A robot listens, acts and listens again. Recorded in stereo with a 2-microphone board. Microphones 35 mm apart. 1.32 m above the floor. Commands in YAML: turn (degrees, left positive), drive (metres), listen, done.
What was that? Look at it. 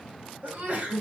turn: -55
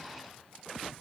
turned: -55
listen: true
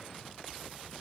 done: "I heard a sneeze, but can't make it out now. It was about straight ahead or 70° right."